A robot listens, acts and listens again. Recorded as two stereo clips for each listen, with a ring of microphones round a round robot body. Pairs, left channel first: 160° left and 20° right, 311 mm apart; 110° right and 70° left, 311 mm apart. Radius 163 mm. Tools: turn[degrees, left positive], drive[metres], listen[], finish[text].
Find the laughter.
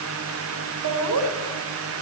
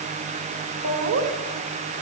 Thought: The laughter: 20° left.
Action: turn[20]
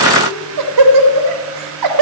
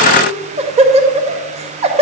Action: finish[Facing the laughter, 2 to 4 m away.]